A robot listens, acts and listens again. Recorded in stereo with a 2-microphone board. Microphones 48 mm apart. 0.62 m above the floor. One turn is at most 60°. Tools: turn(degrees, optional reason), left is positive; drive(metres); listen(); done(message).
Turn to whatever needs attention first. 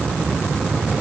listen()
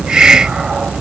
listen()
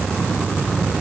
done("I can't make out anything urgent to turn to.")